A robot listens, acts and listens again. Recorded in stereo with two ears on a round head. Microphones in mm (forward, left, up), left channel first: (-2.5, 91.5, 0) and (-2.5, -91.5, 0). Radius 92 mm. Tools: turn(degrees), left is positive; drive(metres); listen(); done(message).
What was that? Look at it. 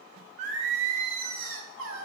turn(degrees=-75)
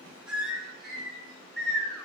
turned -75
done("Found it: singing, straight ahead.")